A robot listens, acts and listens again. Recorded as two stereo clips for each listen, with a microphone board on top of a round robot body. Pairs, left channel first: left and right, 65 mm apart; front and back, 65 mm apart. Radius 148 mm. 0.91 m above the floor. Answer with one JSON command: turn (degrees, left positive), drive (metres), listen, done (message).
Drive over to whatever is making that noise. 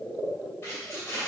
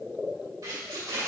{"turn": 150}
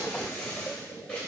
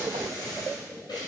{"turn": 20}
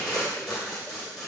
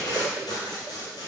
{"drive": 1.0}
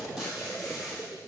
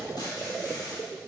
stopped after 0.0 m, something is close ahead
{"done": "Something is in my way. I am facing the tape being pulled but have not reached it."}